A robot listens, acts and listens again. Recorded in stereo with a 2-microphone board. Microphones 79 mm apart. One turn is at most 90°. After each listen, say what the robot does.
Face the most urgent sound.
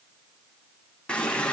Keep listening.
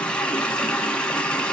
Keep listening.
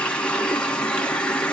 I can't make out anything urgent, only a running tap.